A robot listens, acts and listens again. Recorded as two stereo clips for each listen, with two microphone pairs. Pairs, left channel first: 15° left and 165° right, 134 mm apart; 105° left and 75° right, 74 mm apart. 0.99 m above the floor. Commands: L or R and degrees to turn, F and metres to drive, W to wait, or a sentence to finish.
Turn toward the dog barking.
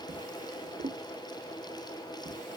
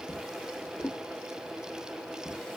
W
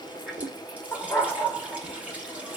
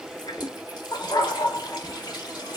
L90
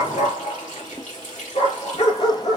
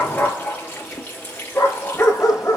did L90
L50
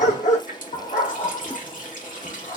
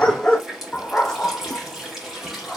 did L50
L20
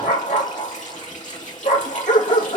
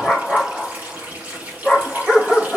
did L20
Facing the dog barking, 2 to 4 m away.